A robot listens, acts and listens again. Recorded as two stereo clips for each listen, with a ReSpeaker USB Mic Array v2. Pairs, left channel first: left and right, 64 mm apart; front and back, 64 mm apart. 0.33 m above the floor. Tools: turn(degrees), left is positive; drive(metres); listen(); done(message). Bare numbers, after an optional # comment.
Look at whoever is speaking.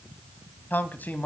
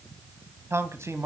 # The man speaking: 150° left.
turn(150)
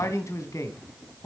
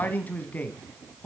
# The man speaking is now 65° left.
turn(65)
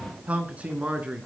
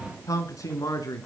# The man speaking is now 20° right.
turn(-20)
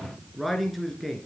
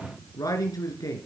done("Found it: a man speaking, straight ahead, over 4 m away.")